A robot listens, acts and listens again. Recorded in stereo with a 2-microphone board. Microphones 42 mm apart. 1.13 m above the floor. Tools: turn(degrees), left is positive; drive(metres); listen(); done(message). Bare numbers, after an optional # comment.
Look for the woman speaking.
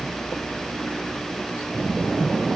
listen()
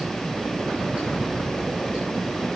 listen()
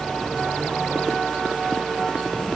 done("I can't make out a woman speaking to turn to.")